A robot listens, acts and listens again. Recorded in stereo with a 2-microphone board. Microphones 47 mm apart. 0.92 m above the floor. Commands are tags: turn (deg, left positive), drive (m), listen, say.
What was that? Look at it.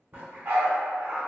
<turn deg="-45"/>
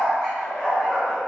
<turn deg="25"/>
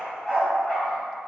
<turn deg="10"/>
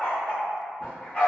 <turn deg="20"/>
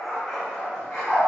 <turn deg="10"/>
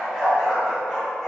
<say>Facing the dog barking, 1 to 2 m away.</say>